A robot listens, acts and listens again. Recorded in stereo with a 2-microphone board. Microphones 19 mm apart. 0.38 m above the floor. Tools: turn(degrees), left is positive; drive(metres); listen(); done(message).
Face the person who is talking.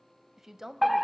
turn(degrees=-25)
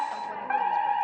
listen()
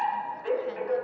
listen()
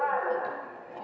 done("I heard a woman speaking, but can't make it out now. It was about straight ahead or 130° right.")